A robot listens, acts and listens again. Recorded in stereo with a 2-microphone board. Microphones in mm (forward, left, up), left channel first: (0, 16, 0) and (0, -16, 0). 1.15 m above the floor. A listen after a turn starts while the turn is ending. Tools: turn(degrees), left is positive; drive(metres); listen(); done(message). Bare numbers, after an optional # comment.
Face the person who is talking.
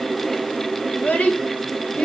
# The child speaking: about 55° left or 125° left.
turn(55)
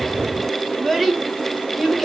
done("Facing the child speaking.")